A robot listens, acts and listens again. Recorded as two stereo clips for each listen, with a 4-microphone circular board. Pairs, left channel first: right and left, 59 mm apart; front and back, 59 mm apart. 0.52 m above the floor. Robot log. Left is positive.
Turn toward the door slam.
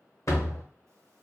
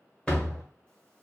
note: The door slam: 70° right.
cmd yaw -70
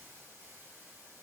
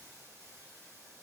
end: I heard a door slam from this way, but can't make it out now.